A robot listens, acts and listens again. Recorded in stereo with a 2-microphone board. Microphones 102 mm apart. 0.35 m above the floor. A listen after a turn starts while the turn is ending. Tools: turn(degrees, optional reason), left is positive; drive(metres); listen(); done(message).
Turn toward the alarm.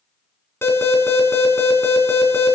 turn(degrees=25, reason="The alarm: about 25° left or 155° left.")
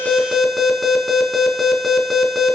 done("Found it: an alarm, straight ahead, 2 to 4 m away.")